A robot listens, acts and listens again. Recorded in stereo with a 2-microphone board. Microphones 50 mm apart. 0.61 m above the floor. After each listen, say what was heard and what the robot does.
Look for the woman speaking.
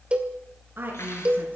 The woman speaking: about 45° right or 135° right. Turn 45° right.
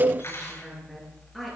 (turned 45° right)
Facing the woman speaking.